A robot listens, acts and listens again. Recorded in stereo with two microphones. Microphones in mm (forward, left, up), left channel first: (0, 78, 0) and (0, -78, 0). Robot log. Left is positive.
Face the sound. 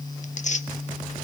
note: The tearing paper: about 50° left or 130° left.
cmd yaw +50
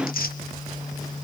note: So it is at 80° left.
cmd yaw +80
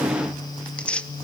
note: The tearing paper is now 10° left.
cmd yaw +10
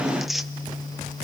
end: Facing the tearing paper.